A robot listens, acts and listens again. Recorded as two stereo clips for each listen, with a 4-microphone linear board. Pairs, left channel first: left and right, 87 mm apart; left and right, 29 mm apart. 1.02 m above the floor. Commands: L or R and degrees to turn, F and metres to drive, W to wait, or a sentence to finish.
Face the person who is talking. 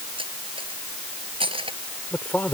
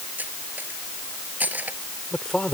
L20
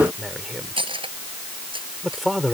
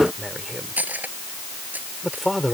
Found it: a man speaking, straight ahead.